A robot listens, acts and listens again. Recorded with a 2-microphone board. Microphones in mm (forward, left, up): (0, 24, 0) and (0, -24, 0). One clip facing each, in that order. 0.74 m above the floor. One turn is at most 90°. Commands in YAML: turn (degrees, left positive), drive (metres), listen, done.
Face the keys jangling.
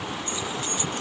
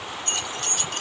turn: -90
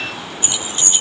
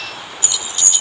turn: 35
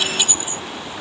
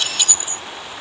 turn: 20
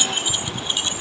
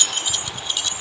turn: 25
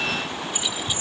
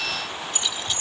turn: 10
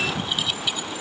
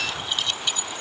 done: "Facing the keys jangling."